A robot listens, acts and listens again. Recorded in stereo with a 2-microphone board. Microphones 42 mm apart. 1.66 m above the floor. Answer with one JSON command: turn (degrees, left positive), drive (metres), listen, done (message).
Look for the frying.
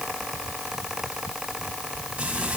{"turn": -30}
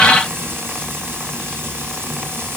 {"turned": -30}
{"turn": -120}
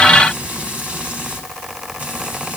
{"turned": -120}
{"turn": -30}
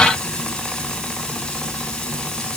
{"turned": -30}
{"turn": 15}
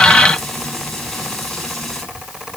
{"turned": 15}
{"done": "Facing the frying, over 4 m away."}